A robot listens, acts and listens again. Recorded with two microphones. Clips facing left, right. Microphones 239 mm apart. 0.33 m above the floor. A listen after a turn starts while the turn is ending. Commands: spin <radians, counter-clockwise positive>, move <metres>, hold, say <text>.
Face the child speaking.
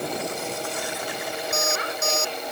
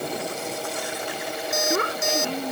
spin -1.05
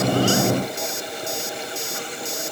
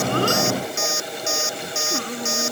hold
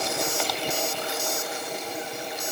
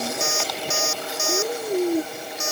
spin -1.22
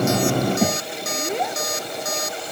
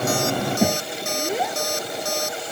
say Facing the child speaking.